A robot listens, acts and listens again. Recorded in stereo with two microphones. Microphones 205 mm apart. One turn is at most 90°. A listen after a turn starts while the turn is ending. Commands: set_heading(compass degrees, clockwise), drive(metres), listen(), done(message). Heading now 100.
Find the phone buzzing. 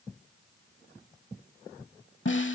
listen()
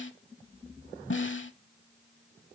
listen()
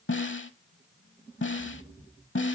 done("I can't make out a phone buzzing to turn to.")